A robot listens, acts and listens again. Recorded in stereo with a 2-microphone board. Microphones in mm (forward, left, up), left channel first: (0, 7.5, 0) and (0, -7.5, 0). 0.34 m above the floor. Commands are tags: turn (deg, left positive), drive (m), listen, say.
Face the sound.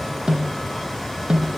<turn deg="-65"/>
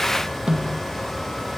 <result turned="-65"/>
<turn deg="-45"/>
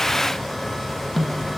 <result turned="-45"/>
<say>Found it: a snare drum, straight ahead, 2 to 4 m away.</say>